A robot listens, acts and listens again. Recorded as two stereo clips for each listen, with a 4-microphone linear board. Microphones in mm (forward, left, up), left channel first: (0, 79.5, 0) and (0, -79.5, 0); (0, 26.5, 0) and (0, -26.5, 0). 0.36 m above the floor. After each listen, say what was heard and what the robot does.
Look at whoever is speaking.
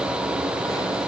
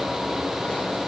Keep listening.
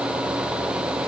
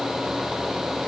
Keep listening.
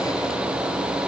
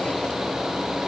I can't make out anyone speaking.